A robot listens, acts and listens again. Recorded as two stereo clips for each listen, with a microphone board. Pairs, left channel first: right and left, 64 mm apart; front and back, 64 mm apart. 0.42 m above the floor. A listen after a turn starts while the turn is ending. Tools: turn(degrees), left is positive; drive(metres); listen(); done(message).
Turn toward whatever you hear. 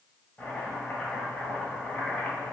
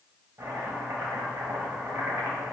turn(degrees=-155)
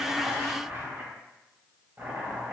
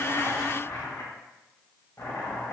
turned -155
turn(degrees=35)
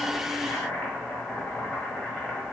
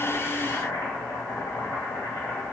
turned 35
turn(degrees=-15)
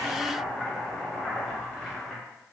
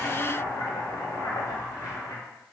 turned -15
done("Found it: chopping, straight ahead, 1 to 2 m away.")